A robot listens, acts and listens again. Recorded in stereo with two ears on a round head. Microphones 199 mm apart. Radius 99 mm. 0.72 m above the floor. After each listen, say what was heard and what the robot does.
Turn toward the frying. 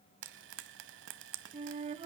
The frying: about 60° right or 120° right. Turn 60° right.
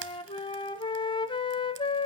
Keep listening.
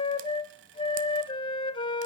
Keep listening.
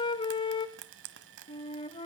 So it is at 60° right. Turn 60° right.
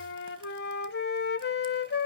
Keep listening.
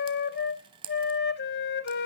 The frying is now 25° right. Turn 25° right.
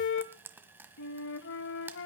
The frying is now 10° right. Turn 10° right.
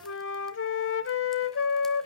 Keep listening.
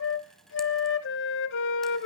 Keep listening.
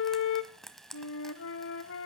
Facing the frying, 1 to 2 m away.